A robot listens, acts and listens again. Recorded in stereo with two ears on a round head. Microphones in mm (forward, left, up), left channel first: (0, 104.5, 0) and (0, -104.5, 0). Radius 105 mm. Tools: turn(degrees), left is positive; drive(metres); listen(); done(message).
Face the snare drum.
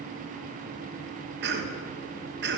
listen()
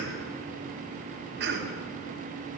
listen()
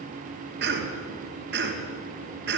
done("I can't make out a snare drum to turn to.")